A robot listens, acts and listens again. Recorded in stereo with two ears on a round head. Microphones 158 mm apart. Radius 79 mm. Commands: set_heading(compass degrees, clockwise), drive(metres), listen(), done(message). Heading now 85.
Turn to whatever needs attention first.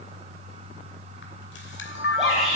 set_heading(115)
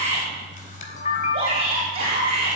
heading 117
set_heading(262)
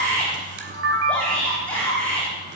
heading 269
done("Facing the shout, over 4 m away.")